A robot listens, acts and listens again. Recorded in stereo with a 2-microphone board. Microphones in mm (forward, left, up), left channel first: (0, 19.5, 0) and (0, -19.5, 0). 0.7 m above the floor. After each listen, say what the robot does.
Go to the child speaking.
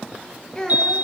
Turn 20° left.
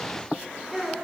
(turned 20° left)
Drive 1.0 m forward.
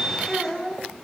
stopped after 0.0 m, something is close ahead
Something is in my way. I am facing the child speaking but have not reached it.